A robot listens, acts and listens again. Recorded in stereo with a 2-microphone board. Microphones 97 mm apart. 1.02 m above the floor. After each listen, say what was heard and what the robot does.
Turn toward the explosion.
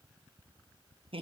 Keep listening.
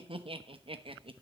Keep listening.
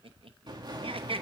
The explosion: about 45° right or 135° right. Turn 45° right.
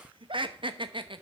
Keep listening.
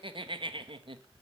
I heard an explosion, but can't make it out now. It was about straight ahead or 90° right.